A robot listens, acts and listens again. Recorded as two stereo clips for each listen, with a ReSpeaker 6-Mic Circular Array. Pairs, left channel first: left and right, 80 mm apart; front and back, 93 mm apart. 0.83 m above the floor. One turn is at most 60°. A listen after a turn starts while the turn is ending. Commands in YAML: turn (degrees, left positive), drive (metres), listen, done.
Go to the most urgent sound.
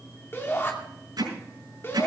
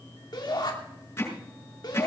turn: 35
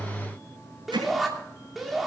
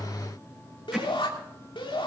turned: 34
drive: 1.0
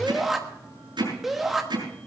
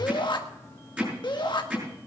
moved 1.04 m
drive: 1.0
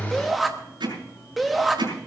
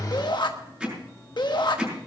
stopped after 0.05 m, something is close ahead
done: "I am next to the shout."